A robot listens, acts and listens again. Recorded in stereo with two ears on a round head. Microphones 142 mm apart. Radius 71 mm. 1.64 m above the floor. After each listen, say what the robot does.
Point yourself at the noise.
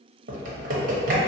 Turn 55° right.
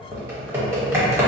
Turn 15° right.
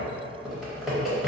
Facing the typing on a keyboard, under 1 m away.